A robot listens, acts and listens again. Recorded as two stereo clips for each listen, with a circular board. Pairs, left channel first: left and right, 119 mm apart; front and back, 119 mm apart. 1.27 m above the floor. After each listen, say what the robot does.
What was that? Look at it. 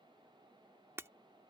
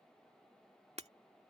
Turn 160° right.
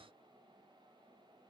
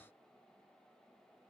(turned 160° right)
Facing where the breaking glass came from. I can't hear it now.